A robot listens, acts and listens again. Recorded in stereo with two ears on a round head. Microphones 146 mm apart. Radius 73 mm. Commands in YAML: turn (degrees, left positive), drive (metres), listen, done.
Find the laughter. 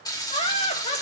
turn: 40
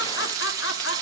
turn: 95
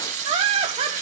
turn: -35
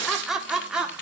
done: "Facing the laughter."